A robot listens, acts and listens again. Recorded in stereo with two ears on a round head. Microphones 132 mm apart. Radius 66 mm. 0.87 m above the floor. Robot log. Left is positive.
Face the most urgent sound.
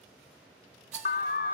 note: The alarm: about 60° left or 120° left.
cmd yaw +60
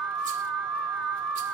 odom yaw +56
end: Found it: an alarm, straight ahead.